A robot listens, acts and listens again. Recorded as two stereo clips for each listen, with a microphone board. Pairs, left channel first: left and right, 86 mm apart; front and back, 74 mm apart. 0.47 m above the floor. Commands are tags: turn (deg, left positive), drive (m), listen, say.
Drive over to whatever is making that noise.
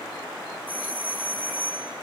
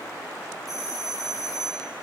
<turn deg="25"/>
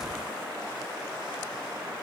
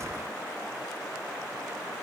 <listen/>
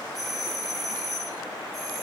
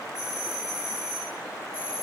<drive m="1.0"/>
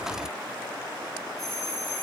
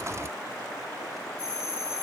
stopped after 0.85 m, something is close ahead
<say>Arrived at the doorbell, straight ahead.</say>